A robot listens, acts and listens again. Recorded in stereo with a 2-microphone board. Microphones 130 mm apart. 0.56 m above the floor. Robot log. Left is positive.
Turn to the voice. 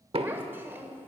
note: The child speaking: about 15° right or 165° right.
cmd yaw -15
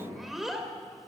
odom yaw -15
end: Found it: a child speaking, straight ahead, 1 to 2 m away.